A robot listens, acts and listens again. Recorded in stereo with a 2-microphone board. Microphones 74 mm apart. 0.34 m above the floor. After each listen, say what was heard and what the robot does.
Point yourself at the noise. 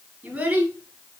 The child speaking: about 15° right or 165° right. Turn 15° right.
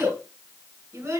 The child speaking: about 35° right or 145° right. Turn 35° right.
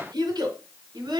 So it is at 110° right. Turn 110° right.
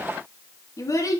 The child speaking is now 50° left. Turn 50° left.
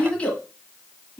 The child speaking is now 15° left. Turn 15° left.
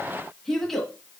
Found it: a child speaking, straight ahead, 1 to 2 m away.